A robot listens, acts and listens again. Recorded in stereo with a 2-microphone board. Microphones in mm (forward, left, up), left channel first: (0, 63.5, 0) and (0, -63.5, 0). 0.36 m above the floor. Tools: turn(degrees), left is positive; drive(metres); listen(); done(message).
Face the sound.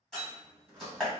turn(degrees=30)
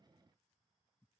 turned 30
listen()
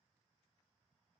done("I heard a door slam, but can't make it out now. It was about 30° right or 150° left.")